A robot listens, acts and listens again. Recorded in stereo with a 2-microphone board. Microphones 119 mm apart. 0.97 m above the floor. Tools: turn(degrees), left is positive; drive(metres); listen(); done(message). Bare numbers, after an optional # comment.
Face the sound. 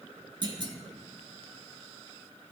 # The clunk: about 45° right or 135° right.
turn(-45)
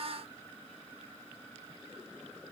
listen()
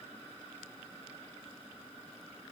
done("I heard a clunk, but can't make it out now. It was about straight ahead or 90° right.")